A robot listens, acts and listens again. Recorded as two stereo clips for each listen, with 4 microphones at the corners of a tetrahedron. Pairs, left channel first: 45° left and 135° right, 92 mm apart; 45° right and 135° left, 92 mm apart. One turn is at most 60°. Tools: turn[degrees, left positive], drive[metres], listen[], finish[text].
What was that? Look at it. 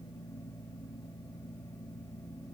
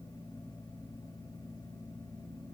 Action: listen[]
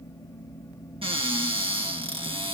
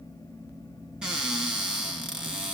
Thought: The cupboard door: 145° right.
Action: turn[-60]
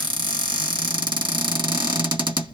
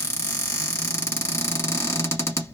Thought: The cupboard door is now 105° right.
Action: turn[-60]
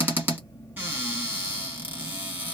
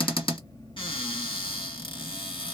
Thought: The cupboard door is now 65° right.
Action: turn[-60]
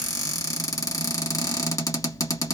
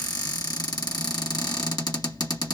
Action: finish[Facing the cupboard door, 1 to 2 m away.]